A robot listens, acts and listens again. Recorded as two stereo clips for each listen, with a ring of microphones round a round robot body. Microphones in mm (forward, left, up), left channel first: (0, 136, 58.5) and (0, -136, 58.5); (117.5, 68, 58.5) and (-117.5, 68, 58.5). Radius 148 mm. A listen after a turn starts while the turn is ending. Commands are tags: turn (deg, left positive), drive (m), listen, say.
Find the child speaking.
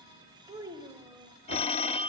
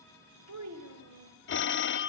<turn deg="-170"/>
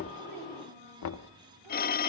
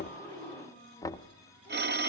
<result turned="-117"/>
<turn deg="-55"/>
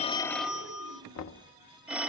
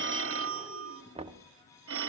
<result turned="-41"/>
<turn deg="-10"/>
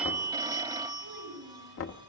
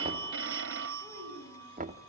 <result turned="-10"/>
<turn deg="-30"/>
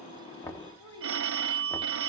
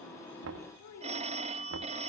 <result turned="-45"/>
<turn deg="15"/>
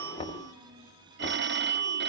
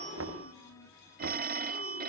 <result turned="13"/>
<listen/>
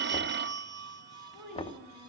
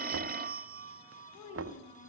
<say>Found it: a child speaking, straight ahead.</say>